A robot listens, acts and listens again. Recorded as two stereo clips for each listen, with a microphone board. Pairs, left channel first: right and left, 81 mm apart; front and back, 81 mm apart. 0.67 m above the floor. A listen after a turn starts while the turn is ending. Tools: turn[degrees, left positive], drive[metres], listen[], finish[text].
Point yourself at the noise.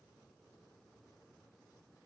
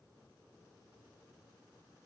Action: listen[]
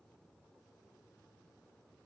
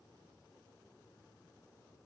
Action: listen[]
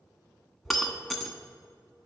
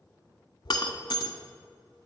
Action: finish[Found it: breaking glass, straight ahead.]